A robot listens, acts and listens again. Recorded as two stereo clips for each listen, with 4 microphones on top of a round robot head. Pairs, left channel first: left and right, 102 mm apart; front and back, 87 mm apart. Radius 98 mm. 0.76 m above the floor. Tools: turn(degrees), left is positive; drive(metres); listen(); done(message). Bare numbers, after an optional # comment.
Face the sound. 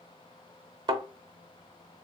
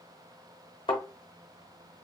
# The thud: 45° right.
turn(-45)
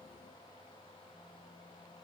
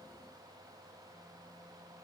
done("Facing where the thud came from. I can't hear it now.")